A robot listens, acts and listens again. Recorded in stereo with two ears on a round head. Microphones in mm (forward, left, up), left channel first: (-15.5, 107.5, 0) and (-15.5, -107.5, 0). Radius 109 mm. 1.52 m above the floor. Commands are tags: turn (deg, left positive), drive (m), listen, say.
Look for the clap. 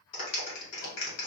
<turn deg="65"/>
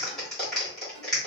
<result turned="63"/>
<say>Facing the clap.</say>